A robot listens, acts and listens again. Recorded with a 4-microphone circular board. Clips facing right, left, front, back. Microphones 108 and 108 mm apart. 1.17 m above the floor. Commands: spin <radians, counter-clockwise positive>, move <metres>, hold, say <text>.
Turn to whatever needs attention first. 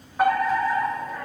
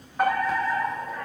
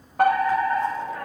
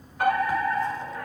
say Found it: a fire alarm, straight ahead, over 4 m away.